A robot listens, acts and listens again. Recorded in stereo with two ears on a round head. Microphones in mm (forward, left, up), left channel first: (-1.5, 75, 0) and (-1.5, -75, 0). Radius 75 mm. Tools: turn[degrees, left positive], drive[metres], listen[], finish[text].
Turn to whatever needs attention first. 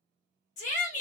Thought: The shout: about 45° left or 135° left.
Action: turn[45]
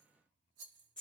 Action: finish[Facing the shout, 1 to 2 m away.]